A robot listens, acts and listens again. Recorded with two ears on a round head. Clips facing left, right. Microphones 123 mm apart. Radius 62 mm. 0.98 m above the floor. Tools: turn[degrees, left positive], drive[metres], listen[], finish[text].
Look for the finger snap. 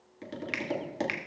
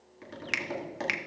Thought: The finger snap: about 55° right or 125° right.
Action: turn[-55]
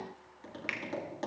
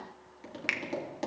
Thought: So it is at 65° right.
Action: turn[-65]
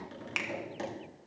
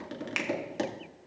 Action: finish[Found it: a finger snap, straight ahead, 1 to 2 m away.]